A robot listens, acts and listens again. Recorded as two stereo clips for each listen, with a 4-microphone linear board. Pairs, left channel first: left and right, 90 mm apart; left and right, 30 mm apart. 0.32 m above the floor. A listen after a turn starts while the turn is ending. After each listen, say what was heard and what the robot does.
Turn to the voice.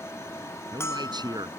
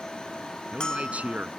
The man speaking: about 50° right or 130° right. Turn 50° right.
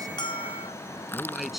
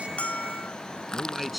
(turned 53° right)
Facing the man speaking.